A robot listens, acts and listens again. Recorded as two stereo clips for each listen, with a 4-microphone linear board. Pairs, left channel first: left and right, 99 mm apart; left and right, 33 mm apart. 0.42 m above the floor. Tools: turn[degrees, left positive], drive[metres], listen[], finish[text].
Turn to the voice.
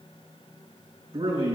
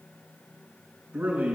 Action: turn[-90]
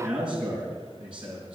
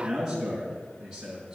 Thought: So it is at 10° right.
Action: turn[-10]
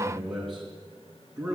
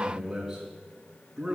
Action: finish[Facing the man speaking, over 4 m away.]